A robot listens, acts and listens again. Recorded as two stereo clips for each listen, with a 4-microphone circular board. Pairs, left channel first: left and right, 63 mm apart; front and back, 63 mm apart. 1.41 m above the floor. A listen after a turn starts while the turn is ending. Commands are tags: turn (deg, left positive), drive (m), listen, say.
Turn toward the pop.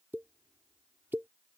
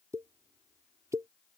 <turn deg="-145"/>
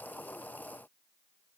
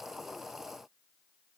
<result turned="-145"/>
<say>I heard a pop from this way, but can't make it out now.</say>